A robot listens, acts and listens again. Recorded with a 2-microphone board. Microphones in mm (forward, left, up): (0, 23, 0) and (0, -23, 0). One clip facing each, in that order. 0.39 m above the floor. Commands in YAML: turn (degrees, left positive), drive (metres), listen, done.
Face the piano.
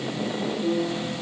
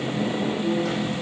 turn: 60
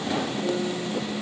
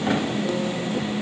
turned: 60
listen: true
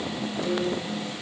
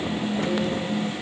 listen: true
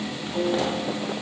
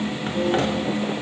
done: "Found it: a piano, straight ahead."